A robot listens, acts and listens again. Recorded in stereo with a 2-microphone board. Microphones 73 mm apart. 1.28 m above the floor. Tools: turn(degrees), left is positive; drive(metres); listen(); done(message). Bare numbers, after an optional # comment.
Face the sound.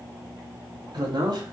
# The man speaking: about 75° right or 105° right.
turn(-75)
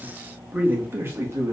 # So it is at 40° right.
turn(-40)
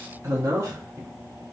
# The man speaking is now 40° right.
turn(-40)
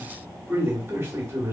# The man speaking is now 25° right.
turn(-25)
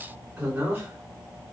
# The man speaking is now 20° right.
turn(-20)
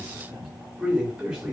done("Facing the man speaking.")